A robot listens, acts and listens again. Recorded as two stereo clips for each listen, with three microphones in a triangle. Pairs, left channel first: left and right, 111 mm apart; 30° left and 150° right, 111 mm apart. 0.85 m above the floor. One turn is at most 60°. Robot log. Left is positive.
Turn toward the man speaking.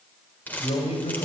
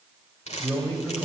note: The man speaking: 100° left.
cmd yaw +60
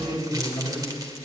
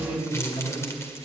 note: The man speaking is now 40° left.
cmd yaw +40
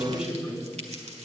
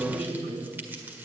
note: The man speaking is now 10° right.
cmd yaw -10
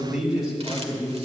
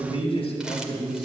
note: The man speaking is now 10° right.
cmd yaw -10
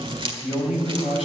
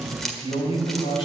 end: Facing the man speaking, over 4 m away.